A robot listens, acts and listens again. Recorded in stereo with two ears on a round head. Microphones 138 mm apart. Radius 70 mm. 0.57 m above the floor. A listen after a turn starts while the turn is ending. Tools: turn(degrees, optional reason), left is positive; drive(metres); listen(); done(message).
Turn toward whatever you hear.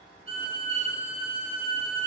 turn(degrees=-40, reason="The violin: about 40° right or 140° right.")
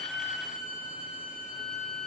done("Found it: a violin, straight ahead, 2 to 4 m away.")